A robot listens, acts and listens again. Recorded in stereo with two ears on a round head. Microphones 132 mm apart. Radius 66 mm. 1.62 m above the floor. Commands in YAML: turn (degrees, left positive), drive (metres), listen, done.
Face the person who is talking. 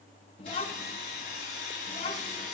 turn: 35
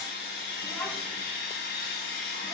listen: true
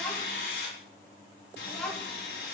done: "Facing the child speaking, 2 to 4 m away."